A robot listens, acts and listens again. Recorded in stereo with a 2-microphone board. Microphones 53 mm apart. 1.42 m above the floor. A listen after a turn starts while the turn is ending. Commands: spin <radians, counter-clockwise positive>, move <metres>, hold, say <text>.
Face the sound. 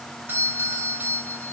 spin -0.70
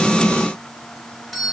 say Found it: a doorbell, straight ahead.